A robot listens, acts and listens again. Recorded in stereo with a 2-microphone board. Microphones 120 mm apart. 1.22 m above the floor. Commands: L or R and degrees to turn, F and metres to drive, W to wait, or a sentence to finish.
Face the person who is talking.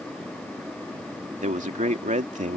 R90
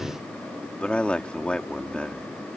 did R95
L10
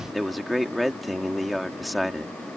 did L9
Facing the man speaking.